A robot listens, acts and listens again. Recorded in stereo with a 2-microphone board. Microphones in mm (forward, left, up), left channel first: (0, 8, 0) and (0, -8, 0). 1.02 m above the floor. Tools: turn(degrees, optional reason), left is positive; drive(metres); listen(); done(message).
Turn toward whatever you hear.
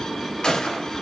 turn(degrees=55, reason="The gunshot: about 55° left or 125° left.")
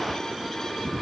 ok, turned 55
listen()
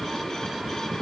done("I heard a gunshot, but can't make it out now. It was about straight ahead or 70° left.")